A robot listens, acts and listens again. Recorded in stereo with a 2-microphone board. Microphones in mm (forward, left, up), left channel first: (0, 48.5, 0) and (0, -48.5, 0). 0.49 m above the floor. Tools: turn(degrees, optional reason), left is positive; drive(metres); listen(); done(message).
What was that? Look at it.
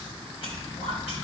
turn(degrees=60, reason="The whispering: about 60° left or 120° left.")
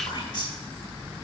turn(degrees=50, reason="So it is at 50° left.")
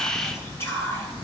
turn(degrees=25, reason="The whispering is now 25° left.")
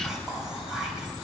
done("Found it: whispering, straight ahead, 2 to 4 m away.")